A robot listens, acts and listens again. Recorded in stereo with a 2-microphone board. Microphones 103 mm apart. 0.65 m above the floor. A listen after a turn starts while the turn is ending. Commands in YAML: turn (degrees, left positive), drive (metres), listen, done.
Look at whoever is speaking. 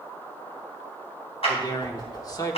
turn: 35
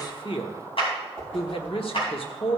turn: 105
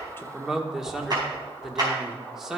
done: "Found it: a man speaking, straight ahead, 1 to 2 m away."